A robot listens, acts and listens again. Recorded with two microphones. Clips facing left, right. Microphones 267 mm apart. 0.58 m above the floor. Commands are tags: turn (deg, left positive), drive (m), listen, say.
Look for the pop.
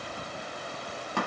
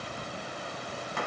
<listen/>
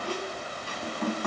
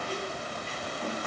<listen/>
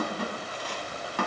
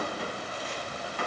<say>I can't make out a pop, only a squeak.</say>